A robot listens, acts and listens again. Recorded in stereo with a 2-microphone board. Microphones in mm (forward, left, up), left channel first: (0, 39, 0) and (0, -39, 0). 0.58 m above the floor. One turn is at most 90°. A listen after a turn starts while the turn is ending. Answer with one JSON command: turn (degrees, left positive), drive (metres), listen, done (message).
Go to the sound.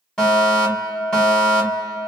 {"turn": 30}
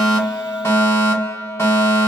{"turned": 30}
{"turn": 90}
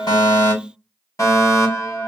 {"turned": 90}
{"turn": 50}
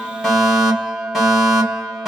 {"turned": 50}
{"drive": 1.0}
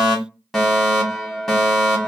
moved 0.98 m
{"drive": 1.0}
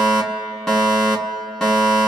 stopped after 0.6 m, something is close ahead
{"done": "Arrived at the fire alarm, straight ahead."}